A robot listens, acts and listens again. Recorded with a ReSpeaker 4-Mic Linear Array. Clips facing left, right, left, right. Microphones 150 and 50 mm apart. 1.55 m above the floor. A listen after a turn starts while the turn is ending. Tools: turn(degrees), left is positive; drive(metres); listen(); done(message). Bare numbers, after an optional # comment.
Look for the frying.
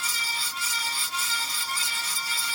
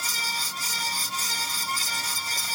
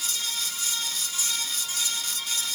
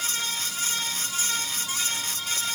listen()
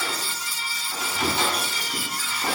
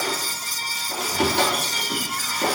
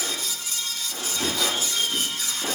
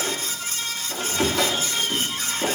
listen()
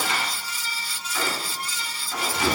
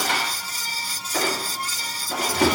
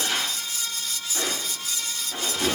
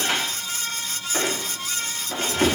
done("I can't make out frying to turn to.")